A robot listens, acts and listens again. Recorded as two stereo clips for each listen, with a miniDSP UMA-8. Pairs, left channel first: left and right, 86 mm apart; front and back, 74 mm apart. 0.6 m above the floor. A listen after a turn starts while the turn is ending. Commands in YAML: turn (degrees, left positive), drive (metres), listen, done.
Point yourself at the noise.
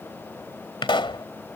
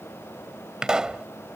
turn: 100
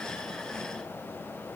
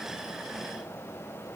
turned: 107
done: "I heard a pop from this way, but can't make it out now."